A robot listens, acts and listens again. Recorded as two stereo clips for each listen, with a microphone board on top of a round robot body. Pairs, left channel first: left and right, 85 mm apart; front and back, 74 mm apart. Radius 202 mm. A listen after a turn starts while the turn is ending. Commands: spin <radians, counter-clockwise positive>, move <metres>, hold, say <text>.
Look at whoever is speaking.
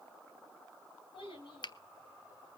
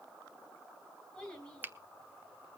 spin 1.40
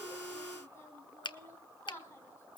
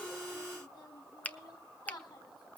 spin 0.52
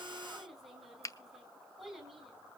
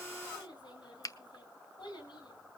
say Found it: a child speaking, straight ahead.